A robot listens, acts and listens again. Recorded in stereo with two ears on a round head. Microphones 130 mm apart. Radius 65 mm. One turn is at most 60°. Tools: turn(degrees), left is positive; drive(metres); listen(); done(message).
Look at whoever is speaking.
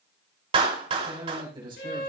turn(degrees=-35)
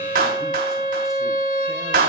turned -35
listen()
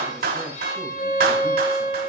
listen()
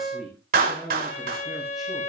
done("Found it: a man speaking, straight ahead, over 4 m away.")